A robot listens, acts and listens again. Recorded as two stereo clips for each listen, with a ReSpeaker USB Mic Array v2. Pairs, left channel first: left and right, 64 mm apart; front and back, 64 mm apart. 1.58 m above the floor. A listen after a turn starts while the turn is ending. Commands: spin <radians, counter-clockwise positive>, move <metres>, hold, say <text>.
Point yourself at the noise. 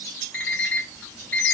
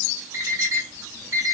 spin 2.62
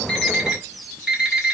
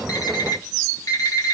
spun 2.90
spin -0.26
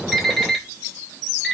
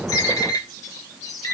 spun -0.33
say Found it: an alarm clock, straight ahead, 2 to 4 m away.